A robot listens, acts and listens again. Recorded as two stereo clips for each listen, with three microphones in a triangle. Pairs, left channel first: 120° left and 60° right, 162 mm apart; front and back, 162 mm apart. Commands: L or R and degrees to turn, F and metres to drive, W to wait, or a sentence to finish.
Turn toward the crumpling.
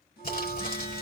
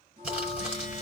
L95
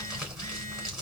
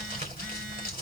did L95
L25
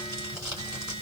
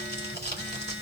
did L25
Facing the crumpling.